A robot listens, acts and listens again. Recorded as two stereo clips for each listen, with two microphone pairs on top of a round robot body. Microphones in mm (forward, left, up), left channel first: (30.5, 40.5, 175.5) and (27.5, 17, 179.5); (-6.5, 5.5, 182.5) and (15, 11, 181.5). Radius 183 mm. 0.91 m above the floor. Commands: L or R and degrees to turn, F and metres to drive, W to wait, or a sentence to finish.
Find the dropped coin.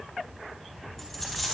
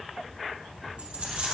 Facing the dropped coin.